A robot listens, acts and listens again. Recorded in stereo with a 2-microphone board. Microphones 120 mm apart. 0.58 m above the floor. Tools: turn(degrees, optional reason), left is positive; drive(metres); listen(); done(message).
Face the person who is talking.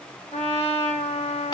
listen()
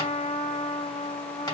listen()
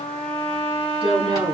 turn(degrees=-35, reason="The woman speaking: about 35° right or 145° right.")
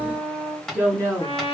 turn(degrees=-10, reason="So it is at 10° right.")
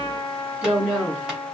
done("Found it: a woman speaking, straight ahead.")